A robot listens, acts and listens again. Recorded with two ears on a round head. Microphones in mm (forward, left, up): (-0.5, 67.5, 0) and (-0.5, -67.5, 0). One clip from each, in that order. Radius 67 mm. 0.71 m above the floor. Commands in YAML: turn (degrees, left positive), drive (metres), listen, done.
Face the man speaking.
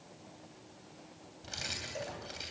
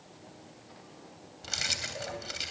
listen: true
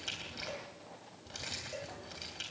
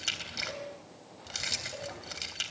listen: true
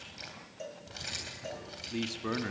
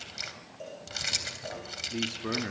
turn: 30
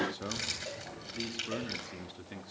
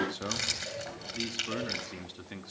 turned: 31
turn: -15
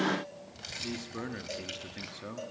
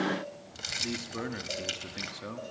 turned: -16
done: "Found it: a man speaking, straight ahead, 1 to 2 m away."